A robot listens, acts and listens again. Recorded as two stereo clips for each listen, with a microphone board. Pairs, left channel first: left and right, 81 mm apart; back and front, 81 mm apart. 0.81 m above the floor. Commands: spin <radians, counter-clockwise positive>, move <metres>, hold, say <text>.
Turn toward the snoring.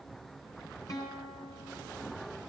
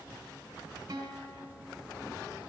hold
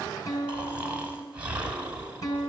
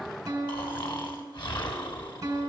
spin -2.88
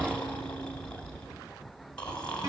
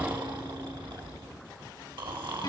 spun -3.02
spin 0.17
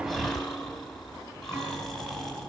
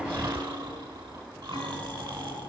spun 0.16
say Facing the snoring.